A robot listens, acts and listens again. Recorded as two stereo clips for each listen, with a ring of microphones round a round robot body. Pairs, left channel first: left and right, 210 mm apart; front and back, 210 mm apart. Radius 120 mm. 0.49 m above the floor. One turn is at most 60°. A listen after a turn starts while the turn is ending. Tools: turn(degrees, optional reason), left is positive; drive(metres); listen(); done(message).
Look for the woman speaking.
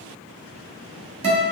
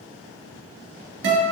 listen()
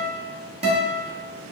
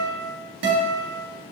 listen()
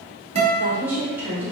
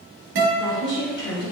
turn(degrees=-10, reason="The woman speaking: 10° right.")
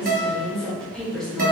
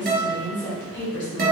done("Found it: a woman speaking, straight ahead, 1 to 2 m away.")